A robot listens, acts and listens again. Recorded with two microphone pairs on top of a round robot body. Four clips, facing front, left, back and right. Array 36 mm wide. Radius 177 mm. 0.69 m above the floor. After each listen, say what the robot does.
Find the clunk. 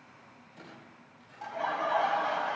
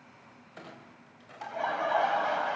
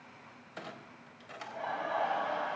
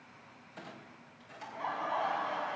Turn 160° left.
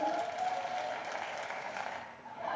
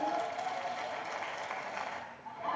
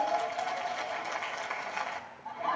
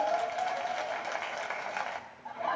Facing where the clunk came from. I can't hear it now.